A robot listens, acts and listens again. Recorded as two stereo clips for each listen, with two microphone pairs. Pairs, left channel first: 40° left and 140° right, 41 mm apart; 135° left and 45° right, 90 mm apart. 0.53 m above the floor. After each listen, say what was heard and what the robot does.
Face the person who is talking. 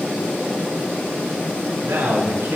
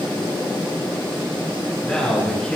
The man speaking: 140° right. Turn 140° right.
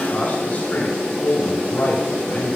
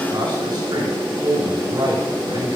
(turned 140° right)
Facing the man speaking.